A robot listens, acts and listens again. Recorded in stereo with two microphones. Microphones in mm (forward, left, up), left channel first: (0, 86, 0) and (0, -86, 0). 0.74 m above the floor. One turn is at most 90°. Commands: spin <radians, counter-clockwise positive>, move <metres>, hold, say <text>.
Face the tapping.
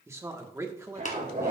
spin 0.79
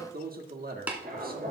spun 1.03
spin -0.17
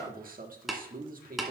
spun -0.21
say Facing the tapping, 1 to 2 m away.